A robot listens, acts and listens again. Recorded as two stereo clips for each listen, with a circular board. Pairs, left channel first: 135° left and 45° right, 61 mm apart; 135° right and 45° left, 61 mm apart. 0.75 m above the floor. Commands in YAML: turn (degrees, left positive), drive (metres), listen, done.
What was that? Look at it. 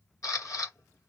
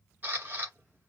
turn: 105
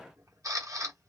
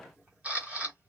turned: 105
turn: -25
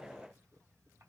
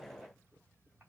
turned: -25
listen: true
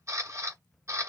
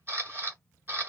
turn: -10
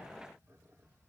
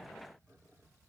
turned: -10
listen: true
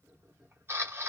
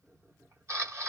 done: "Facing the camera shutter, under 1 m away."